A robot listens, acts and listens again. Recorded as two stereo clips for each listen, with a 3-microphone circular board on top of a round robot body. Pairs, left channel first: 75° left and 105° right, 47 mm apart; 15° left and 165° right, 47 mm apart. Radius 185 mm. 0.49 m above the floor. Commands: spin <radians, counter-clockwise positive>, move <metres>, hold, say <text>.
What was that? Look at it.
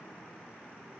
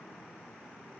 hold
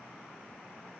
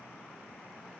hold
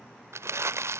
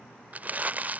spin -1.83
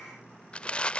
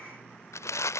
spin 0.17
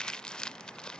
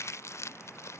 say Found it: crumpling, straight ahead.